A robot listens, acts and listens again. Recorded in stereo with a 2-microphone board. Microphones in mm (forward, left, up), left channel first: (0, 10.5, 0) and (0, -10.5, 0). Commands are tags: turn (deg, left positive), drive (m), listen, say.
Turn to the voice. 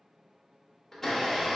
<listen/>
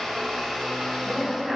<turn deg="-45"/>
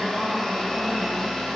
<listen/>
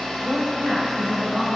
<turn deg="-55"/>
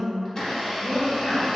<turn deg="15"/>
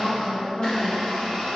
<say>Found it: a woman speaking, straight ahead, 1 to 2 m away.</say>